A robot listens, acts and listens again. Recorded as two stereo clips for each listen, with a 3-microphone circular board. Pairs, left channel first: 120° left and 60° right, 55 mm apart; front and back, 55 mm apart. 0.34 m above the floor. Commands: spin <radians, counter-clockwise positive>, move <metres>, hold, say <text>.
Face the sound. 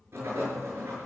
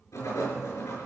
spin -0.26
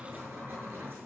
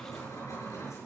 say Found it: writing, straight ahead.